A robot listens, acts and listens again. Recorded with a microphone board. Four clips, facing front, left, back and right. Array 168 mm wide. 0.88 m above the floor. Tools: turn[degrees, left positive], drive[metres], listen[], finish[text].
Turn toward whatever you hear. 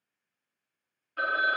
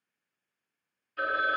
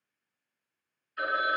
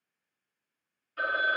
Thought: The phone ringing: 10° right.
Action: turn[-10]
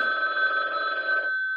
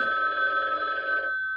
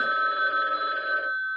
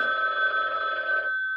Action: finish[Found it: a phone ringing, straight ahead.]